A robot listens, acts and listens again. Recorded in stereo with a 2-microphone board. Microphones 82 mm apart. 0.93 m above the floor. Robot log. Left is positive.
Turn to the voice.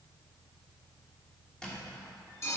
cmd idle
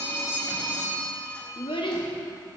cmd yaw +90
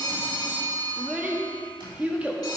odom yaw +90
note: So it is at 15° right.
cmd yaw -15
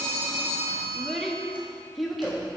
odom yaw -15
end: Facing the child speaking, 1 to 2 m away.